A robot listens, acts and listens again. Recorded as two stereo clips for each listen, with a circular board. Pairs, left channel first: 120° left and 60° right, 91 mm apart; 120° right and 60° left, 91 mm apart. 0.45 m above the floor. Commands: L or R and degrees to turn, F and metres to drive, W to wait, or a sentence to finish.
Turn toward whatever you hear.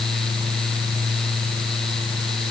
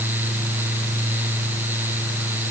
W
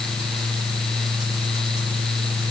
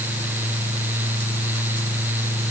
W
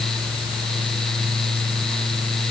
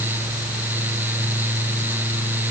I can't make out anything to turn to.